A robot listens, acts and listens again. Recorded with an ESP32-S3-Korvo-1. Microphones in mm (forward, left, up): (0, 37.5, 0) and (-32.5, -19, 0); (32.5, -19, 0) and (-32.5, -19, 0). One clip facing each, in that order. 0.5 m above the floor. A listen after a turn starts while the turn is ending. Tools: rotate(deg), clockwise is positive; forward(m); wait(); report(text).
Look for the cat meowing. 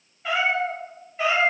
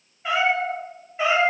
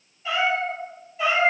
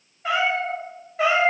rotate(-165)
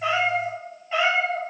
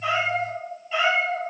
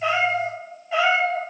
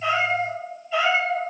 report("Facing the cat meowing, 2 to 4 m away.")